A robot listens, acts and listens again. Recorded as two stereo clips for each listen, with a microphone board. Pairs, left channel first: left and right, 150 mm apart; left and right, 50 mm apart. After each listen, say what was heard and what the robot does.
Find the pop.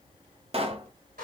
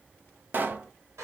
The pop: about 40° right or 140° right. Turn 40° right.
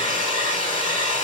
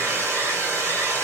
Keep listening.
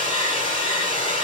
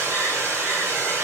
I heard a pop, but can't make it out now. It was about straight ahead or 100° right.